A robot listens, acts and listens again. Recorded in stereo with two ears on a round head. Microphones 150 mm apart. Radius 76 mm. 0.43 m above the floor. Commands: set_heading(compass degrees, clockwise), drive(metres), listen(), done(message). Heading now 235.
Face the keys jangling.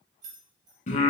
set_heading(280)
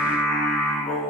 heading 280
listen()
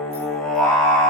listen()
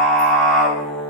done("I heard keys jangling, but can't make it out now. It was about straight ahead or 90° right.")